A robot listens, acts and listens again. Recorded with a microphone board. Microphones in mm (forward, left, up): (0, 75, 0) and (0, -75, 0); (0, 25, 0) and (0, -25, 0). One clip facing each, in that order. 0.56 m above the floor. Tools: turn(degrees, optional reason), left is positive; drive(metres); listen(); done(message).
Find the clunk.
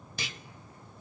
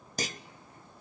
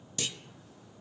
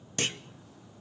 turn(degrees=-40, reason="The clunk: about 40° right or 140° right.")
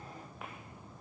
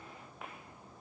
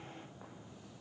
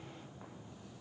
listen()
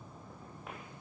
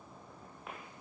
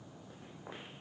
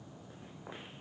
done("I heard a clunk, but can't make it out now. It was about straight ahead or 100° right.")